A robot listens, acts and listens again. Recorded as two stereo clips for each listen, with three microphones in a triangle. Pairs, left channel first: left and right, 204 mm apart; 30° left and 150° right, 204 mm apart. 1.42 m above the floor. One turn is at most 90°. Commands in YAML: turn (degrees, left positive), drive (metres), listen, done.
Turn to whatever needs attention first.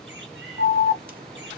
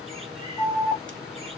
turn: -50
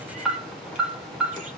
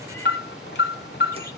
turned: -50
done: "Found it: an alarm, straight ahead."